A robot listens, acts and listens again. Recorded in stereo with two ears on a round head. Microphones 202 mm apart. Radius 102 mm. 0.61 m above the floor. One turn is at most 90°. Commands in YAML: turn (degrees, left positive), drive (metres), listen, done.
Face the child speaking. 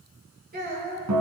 turn: -40
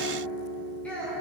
done: "Facing the child speaking."